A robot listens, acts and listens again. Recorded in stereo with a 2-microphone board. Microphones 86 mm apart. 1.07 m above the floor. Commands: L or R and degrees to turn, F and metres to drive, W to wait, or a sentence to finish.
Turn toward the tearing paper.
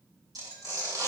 R45
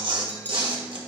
R85
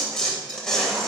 Found it: tearing paper, straight ahead, 2 to 4 m away.